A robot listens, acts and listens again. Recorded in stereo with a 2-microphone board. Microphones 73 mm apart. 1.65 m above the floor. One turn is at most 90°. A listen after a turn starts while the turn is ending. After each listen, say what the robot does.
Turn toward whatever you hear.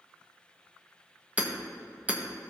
Turn 20° right.
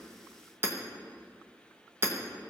Turn 90° right.
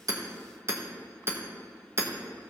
Turn 40° right.
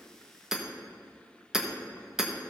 Found it: hammering, straight ahead.